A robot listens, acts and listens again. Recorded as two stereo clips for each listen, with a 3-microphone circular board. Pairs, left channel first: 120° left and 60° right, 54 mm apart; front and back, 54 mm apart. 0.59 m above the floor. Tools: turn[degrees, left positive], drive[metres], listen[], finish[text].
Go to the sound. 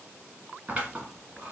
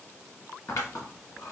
Action: drive[1.0]
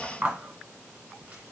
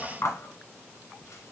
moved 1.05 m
Thought: The scissors is now 10° left.
Action: turn[10]
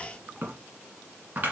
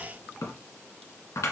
Action: drive[1.0]
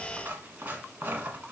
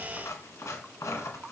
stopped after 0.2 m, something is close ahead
Action: finish[I am next to the scissors.]